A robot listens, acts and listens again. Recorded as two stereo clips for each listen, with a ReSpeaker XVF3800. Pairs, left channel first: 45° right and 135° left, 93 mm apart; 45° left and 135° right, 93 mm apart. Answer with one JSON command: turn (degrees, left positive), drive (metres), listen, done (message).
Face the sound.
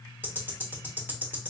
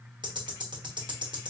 {"turn": -160}
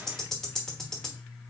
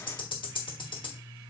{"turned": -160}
{"turn": 40}
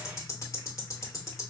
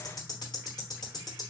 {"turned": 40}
{"done": "Found it: ticking, straight ahead, 1 to 2 m away."}